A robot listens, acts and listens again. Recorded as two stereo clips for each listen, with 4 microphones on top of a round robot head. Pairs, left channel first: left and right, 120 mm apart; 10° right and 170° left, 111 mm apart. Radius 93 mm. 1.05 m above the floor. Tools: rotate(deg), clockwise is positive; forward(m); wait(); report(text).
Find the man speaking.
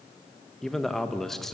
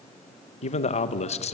report("Facing the man speaking, 1 to 2 m away.")